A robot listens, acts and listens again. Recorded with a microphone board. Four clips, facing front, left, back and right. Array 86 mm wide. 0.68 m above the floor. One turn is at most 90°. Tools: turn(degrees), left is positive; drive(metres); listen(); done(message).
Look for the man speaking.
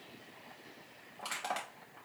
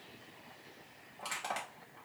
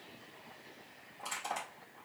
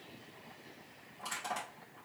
listen()
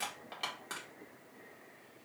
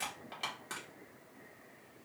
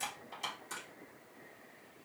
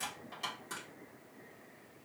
listen()
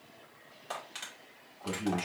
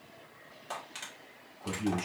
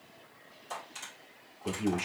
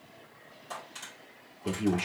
turn(degrees=-90)
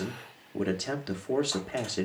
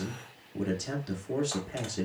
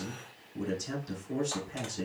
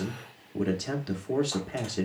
turn(degrees=-20)
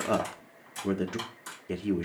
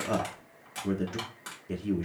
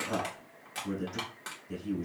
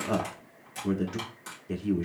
done("Facing the man speaking.")